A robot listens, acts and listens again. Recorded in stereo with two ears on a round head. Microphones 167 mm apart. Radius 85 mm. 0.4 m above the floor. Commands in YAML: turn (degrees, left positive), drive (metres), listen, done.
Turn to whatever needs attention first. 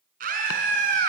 turn: -45
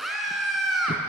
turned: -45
done: "Found it: a scream, straight ahead, over 4 m away."